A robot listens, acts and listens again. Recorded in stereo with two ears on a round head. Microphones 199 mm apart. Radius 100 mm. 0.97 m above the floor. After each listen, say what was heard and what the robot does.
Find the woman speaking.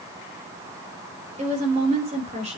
The woman speaking: about 30° right or 150° right. Turn 30° right.
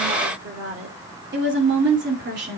So it is at 130° right. Turn 130° right.
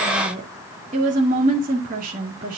The woman speaking is now 40° right. Turn 40° right.
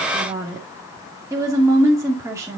The woman speaking is now 15° right. Turn 15° right.
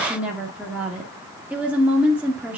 Facing the woman speaking.